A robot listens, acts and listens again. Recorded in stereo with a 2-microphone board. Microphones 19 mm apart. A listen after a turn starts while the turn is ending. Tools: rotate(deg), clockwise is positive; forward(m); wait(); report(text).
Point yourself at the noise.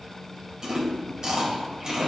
rotate(40)
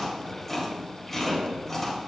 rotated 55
rotate(-10)
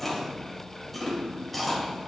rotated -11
report("Facing the chewing, 2 to 4 m away.")